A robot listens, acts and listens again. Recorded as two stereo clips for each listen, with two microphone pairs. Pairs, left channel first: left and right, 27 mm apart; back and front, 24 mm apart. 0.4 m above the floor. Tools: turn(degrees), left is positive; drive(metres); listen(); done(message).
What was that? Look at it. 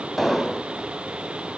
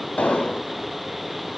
turn(degrees=-175)
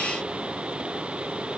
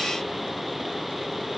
done("Facing where the explosion came from. I can't hear it now.")